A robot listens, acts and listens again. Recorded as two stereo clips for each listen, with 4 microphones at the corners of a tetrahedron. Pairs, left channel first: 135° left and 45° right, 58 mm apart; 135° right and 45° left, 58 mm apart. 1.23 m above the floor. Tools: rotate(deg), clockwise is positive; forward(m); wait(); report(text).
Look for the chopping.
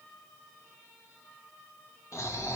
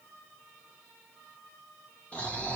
wait()
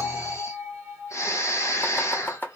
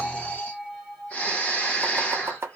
rotate(-85)
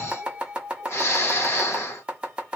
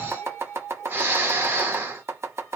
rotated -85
rotate(-20)
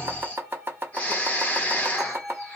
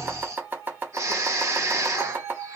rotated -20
report("Facing the chopping.")